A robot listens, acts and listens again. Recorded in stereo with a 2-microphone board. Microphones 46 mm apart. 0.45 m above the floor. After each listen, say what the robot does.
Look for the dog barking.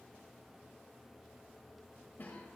Keep listening.
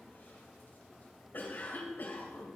Keep listening.
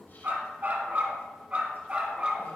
Turn 20° right.
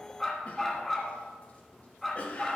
Found it: a dog barking, straight ahead, 1 to 2 m away.